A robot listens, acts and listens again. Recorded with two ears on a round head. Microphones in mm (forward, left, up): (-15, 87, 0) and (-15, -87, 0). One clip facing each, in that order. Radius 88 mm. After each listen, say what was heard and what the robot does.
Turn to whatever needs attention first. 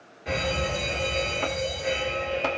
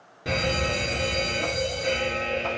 The fire alarm: about 50° right or 130° right. Turn 50° right.
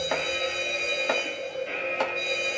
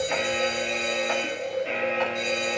So it is at 75° right. Turn 75° right.
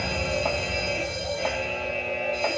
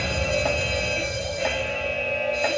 Facing the fire alarm, over 4 m away.